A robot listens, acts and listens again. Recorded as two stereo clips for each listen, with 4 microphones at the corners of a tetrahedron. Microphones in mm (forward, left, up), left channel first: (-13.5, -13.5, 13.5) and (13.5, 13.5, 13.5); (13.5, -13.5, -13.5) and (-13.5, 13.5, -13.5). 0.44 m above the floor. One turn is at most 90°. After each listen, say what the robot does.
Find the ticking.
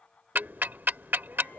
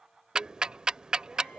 Turn 70° left.
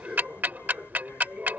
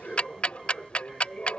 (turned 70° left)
Turn 10° left.
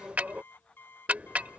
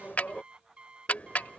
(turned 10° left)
Facing the ticking.